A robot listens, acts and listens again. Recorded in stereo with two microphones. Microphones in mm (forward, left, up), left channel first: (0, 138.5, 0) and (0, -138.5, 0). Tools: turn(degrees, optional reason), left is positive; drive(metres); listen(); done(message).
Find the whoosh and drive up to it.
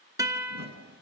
turn(degrees=-40, reason="The whoosh: about 40° right or 140° right.")
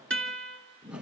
drive(metres=1.0)
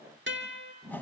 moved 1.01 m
turn(degrees=10, reason="The whoosh is now 10° left.")
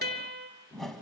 drive(metres=1.0)
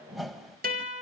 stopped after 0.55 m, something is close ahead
done("I am next to the whoosh.")